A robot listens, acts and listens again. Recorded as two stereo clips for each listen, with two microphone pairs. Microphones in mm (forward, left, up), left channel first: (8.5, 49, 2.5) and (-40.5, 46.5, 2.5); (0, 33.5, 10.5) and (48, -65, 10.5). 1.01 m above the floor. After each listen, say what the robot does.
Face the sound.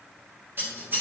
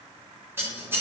Turn 135° right.
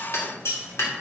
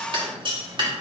Turn 20° right.
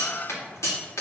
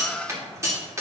Facing the scissors, 2 to 4 m away.